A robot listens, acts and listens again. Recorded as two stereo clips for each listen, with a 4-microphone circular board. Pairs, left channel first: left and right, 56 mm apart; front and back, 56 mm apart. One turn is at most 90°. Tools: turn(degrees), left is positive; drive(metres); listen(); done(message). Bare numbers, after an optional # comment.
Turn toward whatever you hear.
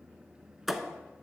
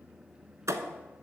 # The thud: 175° right.
turn(-90)
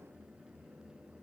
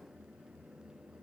# Nothing new. It was at 85° right.
turn(-85)
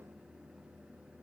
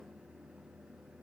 done("Facing where the thud came from. I can't hear it now.")